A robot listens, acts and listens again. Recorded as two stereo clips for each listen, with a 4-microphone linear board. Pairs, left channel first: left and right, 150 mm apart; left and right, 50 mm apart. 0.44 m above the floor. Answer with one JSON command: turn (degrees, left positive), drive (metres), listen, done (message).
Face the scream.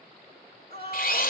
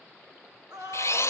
{"turn": -75}
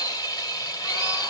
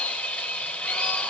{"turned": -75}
{"listen": true}
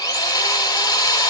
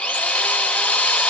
{"listen": true}
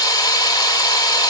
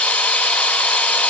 {"done": "I heard a scream, but can't make it out now. It was about straight ahead or 30° right."}